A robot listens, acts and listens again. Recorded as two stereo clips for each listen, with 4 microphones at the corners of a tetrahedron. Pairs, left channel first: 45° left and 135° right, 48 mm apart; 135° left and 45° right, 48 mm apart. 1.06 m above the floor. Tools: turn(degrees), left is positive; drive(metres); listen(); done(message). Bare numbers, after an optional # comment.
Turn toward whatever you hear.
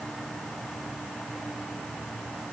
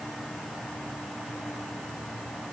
listen()
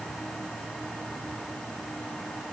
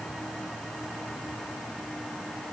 listen()
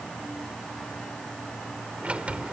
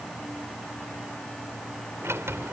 # The sliding door: 70° right.
turn(-70)
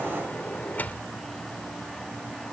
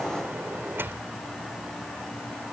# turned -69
done("Found it: a sliding door, straight ahead.")